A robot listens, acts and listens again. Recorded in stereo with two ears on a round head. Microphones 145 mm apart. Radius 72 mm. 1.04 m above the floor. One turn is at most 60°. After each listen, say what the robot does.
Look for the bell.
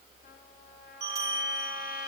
Turn 25° right.
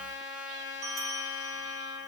Facing the bell.